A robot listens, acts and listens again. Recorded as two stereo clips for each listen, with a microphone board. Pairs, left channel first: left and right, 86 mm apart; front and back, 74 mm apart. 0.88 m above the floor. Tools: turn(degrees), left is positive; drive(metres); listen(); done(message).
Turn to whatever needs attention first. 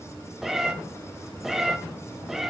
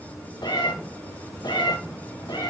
listen()
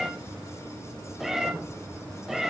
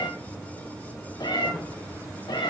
listen()
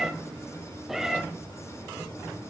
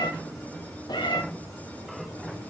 done("I can't make out anything urgent to turn to.")